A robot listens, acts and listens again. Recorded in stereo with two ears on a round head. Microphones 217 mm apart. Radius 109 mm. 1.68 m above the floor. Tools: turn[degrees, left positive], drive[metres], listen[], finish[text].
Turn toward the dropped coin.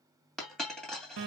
Action: turn[30]
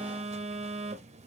Action: listen[]
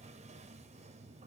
Action: finish[I heard a dropped coin, but can't make it out now. It was about 30° right or 150° left.]